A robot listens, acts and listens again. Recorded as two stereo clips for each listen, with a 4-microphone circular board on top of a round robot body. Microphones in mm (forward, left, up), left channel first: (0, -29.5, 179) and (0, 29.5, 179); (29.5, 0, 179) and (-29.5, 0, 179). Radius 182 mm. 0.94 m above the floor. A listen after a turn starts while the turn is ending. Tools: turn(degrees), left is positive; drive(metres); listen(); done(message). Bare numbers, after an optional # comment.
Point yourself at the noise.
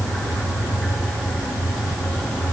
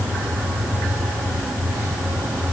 listen()
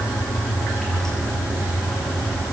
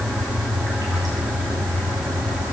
listen()
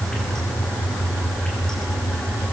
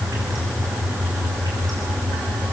done("I can't make out anything to turn to.")